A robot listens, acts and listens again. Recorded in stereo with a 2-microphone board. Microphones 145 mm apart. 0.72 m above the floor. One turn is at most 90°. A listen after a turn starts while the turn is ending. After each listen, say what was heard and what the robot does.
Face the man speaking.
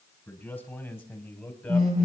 The man speaking: about 20° left or 160° left. Turn 20° left.
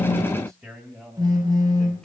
Turn 30° left.
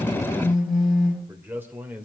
So it is at 10° right. Turn 10° right.
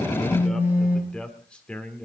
Facing the man speaking, 2 to 4 m away.